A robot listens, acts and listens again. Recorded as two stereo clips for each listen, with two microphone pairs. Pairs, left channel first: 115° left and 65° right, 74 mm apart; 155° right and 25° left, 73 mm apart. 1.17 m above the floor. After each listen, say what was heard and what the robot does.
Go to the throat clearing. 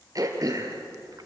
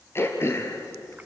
The throat clearing: 105° right. Turn 105° right.
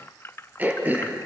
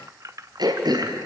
Drive 1.0 m forward.
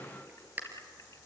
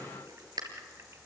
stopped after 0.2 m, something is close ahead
Blocked. The throat clearing is further on, straight ahead.